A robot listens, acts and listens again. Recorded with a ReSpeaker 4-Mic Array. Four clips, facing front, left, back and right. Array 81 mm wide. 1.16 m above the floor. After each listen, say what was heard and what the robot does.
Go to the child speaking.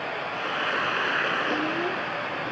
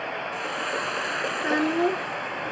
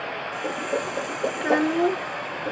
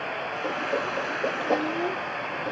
The child speaking: 150° left. Turn 150° left.
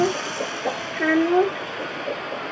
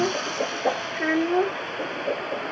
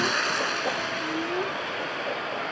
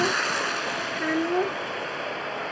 The child speaking is now 15° left. Turn 15° left.
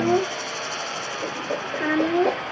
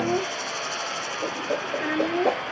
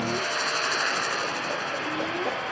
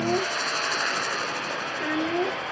Drive 1.0 m forward.
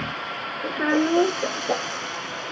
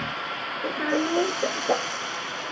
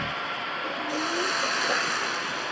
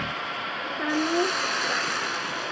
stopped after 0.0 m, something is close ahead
Something is in my way. I am facing the child speaking but have not reached it.